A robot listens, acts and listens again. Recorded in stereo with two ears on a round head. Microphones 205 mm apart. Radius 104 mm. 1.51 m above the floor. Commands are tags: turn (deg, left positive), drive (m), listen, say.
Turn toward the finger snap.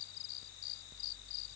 <listen/>
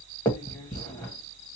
<turn deg="30"/>
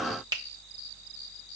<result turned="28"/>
<turn deg="-15"/>
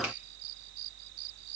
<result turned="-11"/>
<listen/>
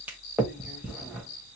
<say>Found it: a finger snap, straight ahead, 1 to 2 m away.</say>